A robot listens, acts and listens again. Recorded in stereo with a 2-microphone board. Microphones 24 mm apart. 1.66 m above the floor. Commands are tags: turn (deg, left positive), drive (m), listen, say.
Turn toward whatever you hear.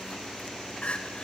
<turn deg="50"/>
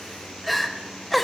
<say>Found it: crying, straight ahead.</say>